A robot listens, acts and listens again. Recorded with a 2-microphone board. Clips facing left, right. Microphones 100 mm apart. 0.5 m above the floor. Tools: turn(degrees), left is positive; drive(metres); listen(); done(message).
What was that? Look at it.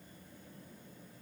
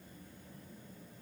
listen()
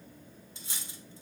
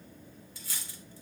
turn(degrees=25)
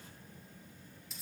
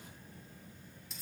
done("Found it: cutlery clinking, straight ahead.")